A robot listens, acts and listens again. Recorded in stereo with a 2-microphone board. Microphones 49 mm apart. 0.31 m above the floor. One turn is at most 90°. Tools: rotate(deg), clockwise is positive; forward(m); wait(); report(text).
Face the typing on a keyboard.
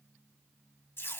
wait()
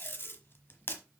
wait()
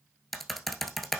rotate(-30)
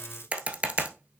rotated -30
rotate(25)
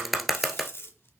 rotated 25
report("Found it: typing on a keyboard, straight ahead.")